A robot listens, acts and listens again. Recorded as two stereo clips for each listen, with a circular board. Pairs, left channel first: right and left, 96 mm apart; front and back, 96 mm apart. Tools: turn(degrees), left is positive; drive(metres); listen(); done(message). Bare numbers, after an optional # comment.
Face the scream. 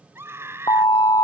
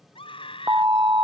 # The scream: 25° left.
turn(25)
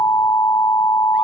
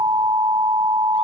listen()
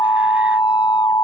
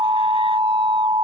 listen()
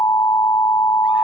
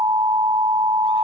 done("I heard a scream from this way, but can't make it out now.")